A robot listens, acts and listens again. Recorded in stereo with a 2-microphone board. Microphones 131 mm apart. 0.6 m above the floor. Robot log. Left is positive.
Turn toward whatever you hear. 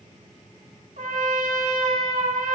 cmd yaw -90
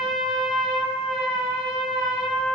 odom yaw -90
end: Facing the trumpet, 1 to 2 m away.